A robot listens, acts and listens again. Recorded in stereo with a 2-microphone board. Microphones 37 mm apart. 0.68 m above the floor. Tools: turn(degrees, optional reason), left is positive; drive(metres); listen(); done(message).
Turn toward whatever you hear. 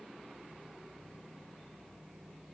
listen()
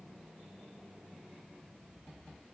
listen()
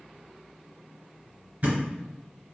turn(degrees=-45, reason="The thud: about 45° right or 135° right.")
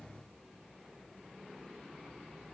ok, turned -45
listen()
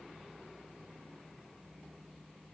done("I heard a thud, but can't make it out now. It was about straight ahead or 90° right.")